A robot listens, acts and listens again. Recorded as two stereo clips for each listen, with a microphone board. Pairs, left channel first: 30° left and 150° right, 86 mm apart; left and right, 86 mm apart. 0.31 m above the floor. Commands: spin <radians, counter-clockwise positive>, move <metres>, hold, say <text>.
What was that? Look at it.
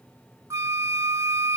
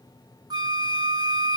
spin -1.83
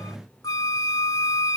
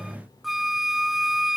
say Found it: a flute, straight ahead.